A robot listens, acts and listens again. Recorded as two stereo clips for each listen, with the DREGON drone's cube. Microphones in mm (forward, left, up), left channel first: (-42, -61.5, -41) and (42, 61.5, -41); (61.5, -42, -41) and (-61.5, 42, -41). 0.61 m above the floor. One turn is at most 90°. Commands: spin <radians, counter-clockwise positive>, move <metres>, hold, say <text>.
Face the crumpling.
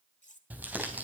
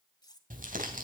spin 1.57
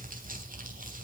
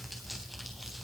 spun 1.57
spin 0.96
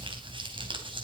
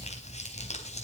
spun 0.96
say Found it: crumpling, straight ahead, 2 to 4 m away.